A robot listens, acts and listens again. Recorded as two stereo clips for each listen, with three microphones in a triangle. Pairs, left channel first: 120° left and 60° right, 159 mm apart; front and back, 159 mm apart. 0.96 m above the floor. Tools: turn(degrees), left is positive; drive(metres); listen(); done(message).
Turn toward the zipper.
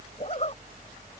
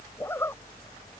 turn(degrees=75)
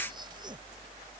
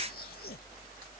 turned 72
listen()
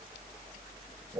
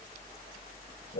done("Facing the zipper.")